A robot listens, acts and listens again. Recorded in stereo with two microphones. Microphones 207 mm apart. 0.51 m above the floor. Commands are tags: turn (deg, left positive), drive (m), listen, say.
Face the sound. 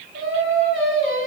<turn deg="-90"/>
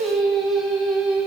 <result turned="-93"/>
<say>Facing the singing.</say>